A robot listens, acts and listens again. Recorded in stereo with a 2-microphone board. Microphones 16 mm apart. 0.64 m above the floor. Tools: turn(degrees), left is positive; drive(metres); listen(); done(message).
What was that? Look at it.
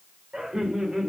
turn(degrees=-65)
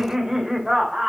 turn(degrees=-25)
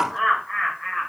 turn(degrees=10)
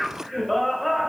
done("Found it: laughter, straight ahead.")